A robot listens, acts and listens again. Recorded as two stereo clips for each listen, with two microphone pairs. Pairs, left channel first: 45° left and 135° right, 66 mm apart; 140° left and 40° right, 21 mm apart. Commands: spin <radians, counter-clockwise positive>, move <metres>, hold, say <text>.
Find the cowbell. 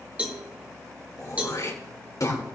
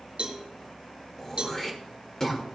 spin -1.22
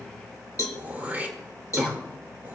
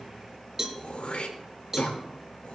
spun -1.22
spin 0.35
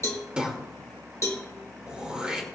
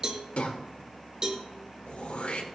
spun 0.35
spin 0.17
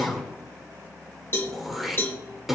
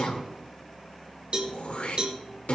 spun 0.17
say Found it: a cowbell, straight ahead.